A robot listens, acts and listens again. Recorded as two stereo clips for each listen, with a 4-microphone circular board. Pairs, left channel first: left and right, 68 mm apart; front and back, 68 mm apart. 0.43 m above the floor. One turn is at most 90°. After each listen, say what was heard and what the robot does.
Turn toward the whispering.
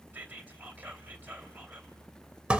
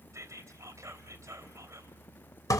The whispering: 150° right. Turn 90° right.
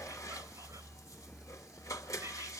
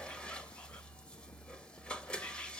Nothing new. It was at 60° right. Turn 60° right.
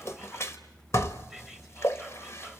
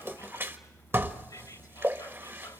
Keep listening.
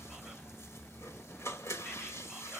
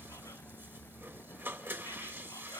I heard whispering from this way, but can't make it out now.